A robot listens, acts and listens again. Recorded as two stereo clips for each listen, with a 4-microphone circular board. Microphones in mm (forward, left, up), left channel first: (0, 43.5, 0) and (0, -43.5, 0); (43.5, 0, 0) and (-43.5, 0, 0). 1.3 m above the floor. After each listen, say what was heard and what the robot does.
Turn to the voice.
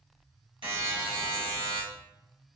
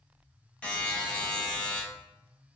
Keep listening.
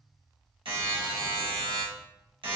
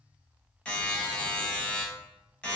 Keep listening.
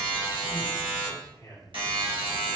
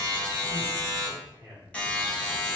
The man speaking: 145° left. Turn 145° left.
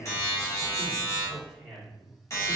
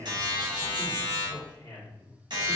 Facing the man speaking.